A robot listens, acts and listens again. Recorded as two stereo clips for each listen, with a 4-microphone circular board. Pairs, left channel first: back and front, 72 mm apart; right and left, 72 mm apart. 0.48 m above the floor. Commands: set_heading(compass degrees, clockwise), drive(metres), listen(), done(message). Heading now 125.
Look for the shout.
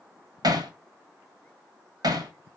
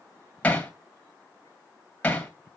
listen()
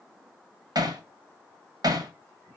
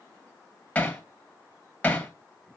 listen()
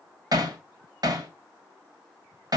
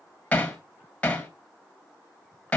done("I can't make out a shout to turn to.")